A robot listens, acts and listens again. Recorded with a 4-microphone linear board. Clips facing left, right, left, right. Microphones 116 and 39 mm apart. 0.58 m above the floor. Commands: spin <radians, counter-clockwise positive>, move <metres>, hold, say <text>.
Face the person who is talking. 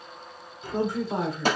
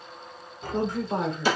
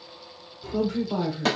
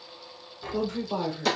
spin 0.52
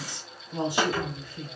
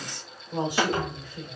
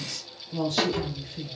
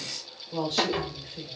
spin -0.35
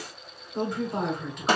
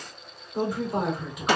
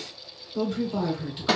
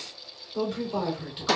say Found it: a woman speaking, straight ahead.